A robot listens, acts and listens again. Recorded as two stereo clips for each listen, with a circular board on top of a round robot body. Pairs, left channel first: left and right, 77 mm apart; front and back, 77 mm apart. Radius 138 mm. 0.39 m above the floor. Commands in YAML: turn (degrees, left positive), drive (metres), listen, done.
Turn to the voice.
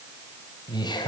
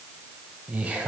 turn: 105
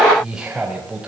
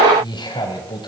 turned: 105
turn: -15
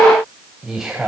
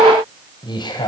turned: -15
done: "Facing the man speaking, over 4 m away."